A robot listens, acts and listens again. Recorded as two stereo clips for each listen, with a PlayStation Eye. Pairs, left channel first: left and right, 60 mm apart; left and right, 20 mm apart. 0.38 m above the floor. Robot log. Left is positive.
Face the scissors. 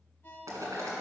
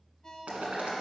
cmd idle
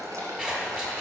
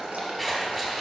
cmd yaw -30
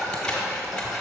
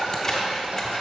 note: So it is at 15° left.
cmd yaw +15
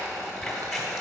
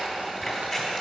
end: Facing the scissors.